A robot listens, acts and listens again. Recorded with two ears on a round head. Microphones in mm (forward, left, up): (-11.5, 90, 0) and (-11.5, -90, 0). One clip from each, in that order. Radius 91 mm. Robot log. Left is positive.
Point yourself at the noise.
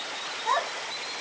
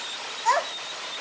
note: The child speaking: about 65° right or 115° right.
cmd yaw -65
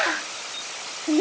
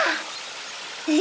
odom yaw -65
note: So it is at 50° right.
cmd yaw -50
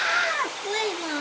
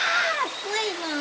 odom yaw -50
note: The child speaking is now 15° right.
cmd yaw -15
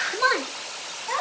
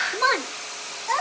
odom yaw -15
note: The child speaking is now 15° right.
cmd yaw -15
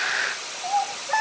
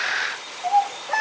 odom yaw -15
end: Found it: a child speaking, straight ahead, 2 to 4 m away.